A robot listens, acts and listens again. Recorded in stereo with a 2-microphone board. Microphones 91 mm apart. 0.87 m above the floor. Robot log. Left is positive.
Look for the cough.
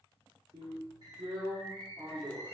cmd idle
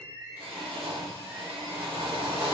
cmd idle
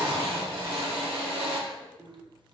end: I can't make out a cough to turn to.